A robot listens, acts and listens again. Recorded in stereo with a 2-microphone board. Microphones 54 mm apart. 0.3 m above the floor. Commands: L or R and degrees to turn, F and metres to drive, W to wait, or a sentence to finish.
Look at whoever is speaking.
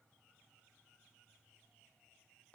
W
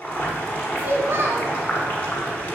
R45
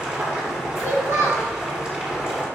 R80
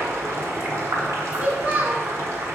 R35
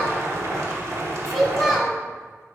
Found it: a child speaking, straight ahead.